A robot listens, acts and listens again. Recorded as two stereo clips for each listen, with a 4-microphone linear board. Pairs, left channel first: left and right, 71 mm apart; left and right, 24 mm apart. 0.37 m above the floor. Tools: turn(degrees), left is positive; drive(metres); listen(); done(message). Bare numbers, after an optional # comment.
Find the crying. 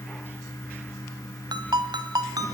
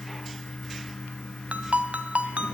listen()
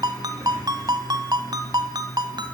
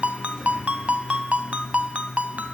listen()
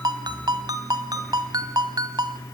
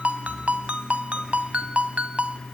done("I can't make out crying, only a ringtone.")